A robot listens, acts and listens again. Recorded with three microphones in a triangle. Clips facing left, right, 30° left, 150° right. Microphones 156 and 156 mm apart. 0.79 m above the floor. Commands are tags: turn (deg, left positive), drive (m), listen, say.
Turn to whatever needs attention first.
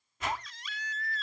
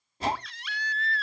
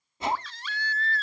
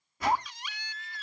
<turn deg="-75"/>
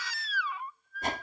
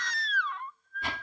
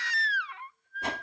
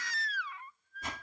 <say>Facing the baby crying.</say>